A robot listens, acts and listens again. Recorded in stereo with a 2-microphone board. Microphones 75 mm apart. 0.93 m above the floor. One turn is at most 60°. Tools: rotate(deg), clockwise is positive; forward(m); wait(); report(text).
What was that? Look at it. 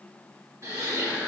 rotate(55)
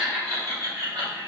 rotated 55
rotate(50)
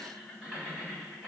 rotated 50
report("Found it: laughter, straight ahead, 2 to 4 m away.")